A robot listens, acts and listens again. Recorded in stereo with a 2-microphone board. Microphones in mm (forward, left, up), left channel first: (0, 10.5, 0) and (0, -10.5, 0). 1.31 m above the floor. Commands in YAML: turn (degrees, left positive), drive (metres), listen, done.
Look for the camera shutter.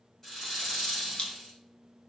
turn: 55
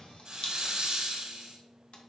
listen: true
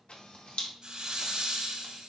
turn: 65
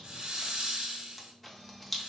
done: "Facing the camera shutter, 1 to 2 m away."